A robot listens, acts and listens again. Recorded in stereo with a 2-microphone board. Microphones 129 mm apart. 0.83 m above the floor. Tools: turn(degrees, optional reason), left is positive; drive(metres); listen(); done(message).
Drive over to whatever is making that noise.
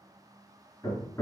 turn(degrees=25, reason="The hammering: about 25° left or 155° left.")
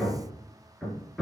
drive(metres=1.0)
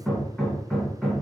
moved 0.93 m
drive(metres=1.0)
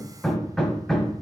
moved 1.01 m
drive(metres=1.0)
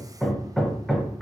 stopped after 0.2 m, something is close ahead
done("Arrived at the hammering, straight ahead.")